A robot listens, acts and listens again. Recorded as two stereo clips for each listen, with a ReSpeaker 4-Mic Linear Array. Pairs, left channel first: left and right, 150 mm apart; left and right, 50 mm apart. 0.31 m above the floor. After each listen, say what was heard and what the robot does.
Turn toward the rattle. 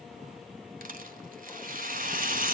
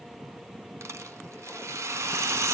The rattle: about 70° right or 110° right. Turn 70° right.
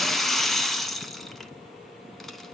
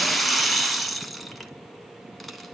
Found it: a rattle, straight ahead.